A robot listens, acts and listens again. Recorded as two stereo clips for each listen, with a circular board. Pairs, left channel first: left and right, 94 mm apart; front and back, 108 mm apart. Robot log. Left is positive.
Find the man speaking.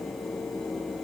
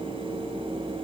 cmd idle
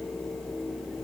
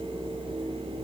cmd idle
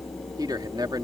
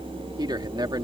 note: The man speaking: 130° right.
cmd yaw -130
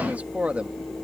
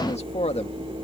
note: The man speaking is now 15° right.
cmd yaw -15
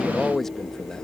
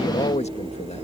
end: Found it: a man speaking, straight ahead.